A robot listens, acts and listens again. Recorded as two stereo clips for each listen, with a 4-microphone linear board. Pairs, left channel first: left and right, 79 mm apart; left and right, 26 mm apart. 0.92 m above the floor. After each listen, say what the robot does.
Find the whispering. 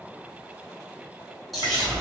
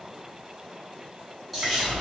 Turn 30° left.
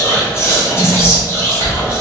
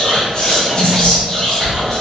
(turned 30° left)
Turn 145° left.
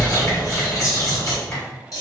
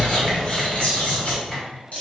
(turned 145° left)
Turn 50° left.
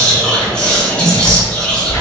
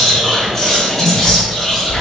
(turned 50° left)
Turn 15° left.
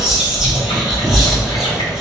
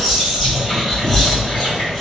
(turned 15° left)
Found it: whispering, straight ahead, 1 to 2 m away.